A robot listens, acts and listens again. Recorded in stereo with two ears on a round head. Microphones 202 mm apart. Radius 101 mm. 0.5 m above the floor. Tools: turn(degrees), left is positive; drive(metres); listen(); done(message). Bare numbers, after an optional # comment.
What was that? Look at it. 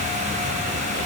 listen()
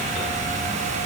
listen()
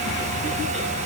done("I can't make out anything.")